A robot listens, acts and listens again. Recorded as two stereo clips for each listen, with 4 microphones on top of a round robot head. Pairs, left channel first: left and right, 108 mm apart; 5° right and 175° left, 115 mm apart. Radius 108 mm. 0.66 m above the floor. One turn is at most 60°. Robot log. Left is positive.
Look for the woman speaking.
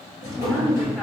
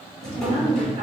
note: The woman speaking: 175° left.
cmd yaw +60
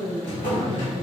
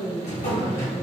note: The woman speaking is now 115° left.
cmd yaw +60
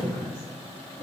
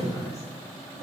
note: Nothing new. It was at 55° left.
cmd yaw +55
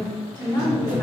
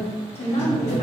note: The woman speaking is now 15° left.
cmd yaw +15
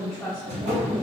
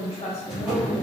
end: Facing the woman speaking, 1 to 2 m away.